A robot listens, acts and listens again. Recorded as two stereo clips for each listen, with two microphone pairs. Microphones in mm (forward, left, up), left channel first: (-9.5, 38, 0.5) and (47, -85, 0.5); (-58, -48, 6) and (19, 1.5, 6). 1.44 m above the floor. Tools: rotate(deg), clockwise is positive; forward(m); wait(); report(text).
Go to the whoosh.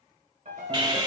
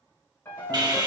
wait()
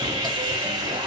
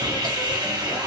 wait()
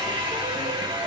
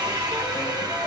report("I can't make out a whoosh, only sawing and a piano.")